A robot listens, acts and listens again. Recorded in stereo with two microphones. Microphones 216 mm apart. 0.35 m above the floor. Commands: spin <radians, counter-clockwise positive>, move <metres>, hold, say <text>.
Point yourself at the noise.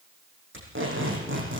spin -1.13
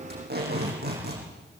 spin -0.79
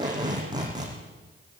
spin -0.35
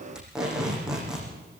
say Facing the tape being pulled.